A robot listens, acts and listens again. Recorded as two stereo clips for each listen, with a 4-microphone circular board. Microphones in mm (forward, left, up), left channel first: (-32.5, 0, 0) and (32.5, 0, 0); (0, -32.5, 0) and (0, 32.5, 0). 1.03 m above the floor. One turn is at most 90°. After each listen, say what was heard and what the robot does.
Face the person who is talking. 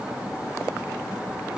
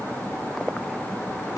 Keep listening.
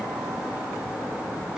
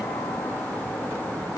Keep listening.
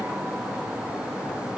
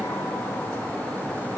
I can't make out anyone speaking to turn to.